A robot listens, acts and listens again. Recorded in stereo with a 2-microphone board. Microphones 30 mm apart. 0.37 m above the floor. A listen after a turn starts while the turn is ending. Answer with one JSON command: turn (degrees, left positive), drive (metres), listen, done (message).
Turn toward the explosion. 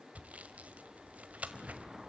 {"turn": -20}
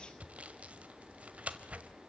{"listen": true}
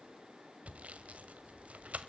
{"done": "I heard an explosion, but can't make it out now. It was about straight ahead or 140° right."}